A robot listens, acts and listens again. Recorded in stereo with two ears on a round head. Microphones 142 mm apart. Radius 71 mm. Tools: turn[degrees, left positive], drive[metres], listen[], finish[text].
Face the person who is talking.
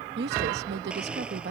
Thought: The woman speaking: about 70° right or 110° right.
Action: turn[-70]
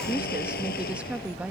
Thought: So it is at 10° right.
Action: turn[-10]
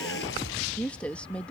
Thought: The woman speaking is now 10° left.
Action: turn[10]
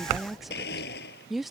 Action: finish[Found it: a woman speaking, straight ahead.]